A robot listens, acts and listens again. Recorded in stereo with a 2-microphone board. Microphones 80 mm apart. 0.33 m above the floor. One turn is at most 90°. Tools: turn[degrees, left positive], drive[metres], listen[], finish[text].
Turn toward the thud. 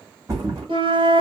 Thought: The thud: about 40° right or 140° right.
Action: turn[-40]
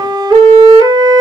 Action: listen[]
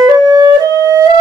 Action: finish[I heard a thud, but can't make it out now. It was about straight ahead or 100° right.]